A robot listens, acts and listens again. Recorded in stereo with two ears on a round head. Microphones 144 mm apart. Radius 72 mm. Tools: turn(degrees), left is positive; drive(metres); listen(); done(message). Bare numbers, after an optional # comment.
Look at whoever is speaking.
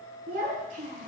# The child speaking: about 55° right or 125° right.
turn(-55)
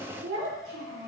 # So it is at 75° right.
turn(-75)
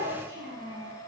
# The child speaking is now 30° right.
turn(-30)
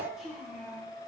done("Found it: a child speaking, straight ahead, over 4 m away.")